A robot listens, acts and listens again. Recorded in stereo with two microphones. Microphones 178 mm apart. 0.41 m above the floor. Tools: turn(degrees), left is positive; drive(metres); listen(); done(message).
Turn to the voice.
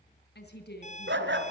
turn(degrees=65)
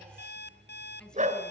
done("Found it: a woman speaking, straight ahead.")